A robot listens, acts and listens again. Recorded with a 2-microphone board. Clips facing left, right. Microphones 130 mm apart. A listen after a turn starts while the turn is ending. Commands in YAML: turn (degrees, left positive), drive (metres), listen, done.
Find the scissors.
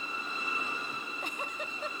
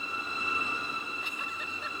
listen: true
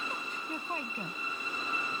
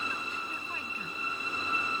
listen: true
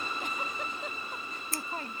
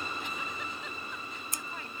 turn: -20
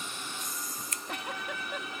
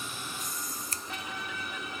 turn: -145
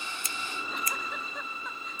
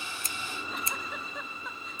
turn: -30
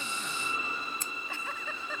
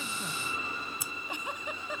turn: -10
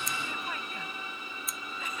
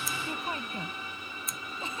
done: "Found it: scissors, straight ahead."